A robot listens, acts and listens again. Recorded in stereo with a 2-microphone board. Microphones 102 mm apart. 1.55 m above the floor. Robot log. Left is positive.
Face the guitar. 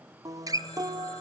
note: The guitar: about 35° right or 145° right.
cmd yaw -35
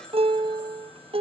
note: So it is at 110° right.
cmd yaw -110
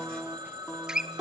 end: Facing the guitar, under 1 m away.